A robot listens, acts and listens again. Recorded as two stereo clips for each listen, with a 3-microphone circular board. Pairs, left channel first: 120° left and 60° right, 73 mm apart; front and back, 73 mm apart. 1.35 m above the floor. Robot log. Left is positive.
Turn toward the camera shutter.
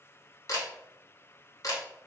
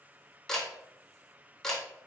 note: The camera shutter: 80° left.
cmd yaw +80
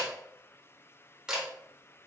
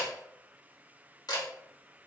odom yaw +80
note: The camera shutter is now 20° left.
cmd yaw +20
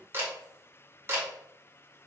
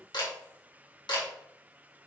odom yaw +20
end: Found it: a camera shutter, straight ahead, 1 to 2 m away.